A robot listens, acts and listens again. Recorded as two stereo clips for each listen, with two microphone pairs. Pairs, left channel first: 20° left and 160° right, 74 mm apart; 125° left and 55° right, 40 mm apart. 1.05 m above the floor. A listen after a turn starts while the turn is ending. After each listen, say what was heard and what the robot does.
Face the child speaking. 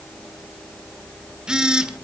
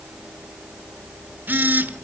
Keep listening.
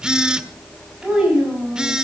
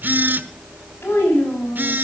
The child speaking: 120° left. Turn 120° left.
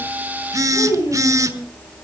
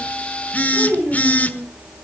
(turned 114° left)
Found it: a child speaking, straight ahead, over 4 m away.